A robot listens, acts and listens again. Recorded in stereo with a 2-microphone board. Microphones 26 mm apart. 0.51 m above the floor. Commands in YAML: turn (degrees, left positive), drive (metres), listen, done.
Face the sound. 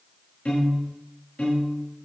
turn: 65
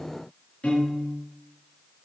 turn: 45
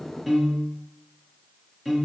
turn: -15
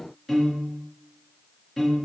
done: "Found it: a piano, straight ahead."